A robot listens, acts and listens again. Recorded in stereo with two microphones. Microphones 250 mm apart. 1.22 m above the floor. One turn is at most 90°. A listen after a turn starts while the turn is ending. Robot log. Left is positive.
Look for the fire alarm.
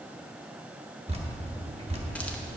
cmd idle
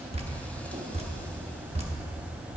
cmd idle
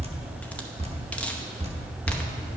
end: I can't make out a fire alarm to turn to.